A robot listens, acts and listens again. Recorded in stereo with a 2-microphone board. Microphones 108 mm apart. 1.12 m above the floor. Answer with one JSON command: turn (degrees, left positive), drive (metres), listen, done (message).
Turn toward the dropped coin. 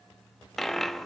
{"turn": 30}
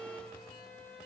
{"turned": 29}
{"listen": true}
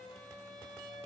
{"done": "I heard a dropped coin, but can't make it out now. It was about 25° right or 150° left."}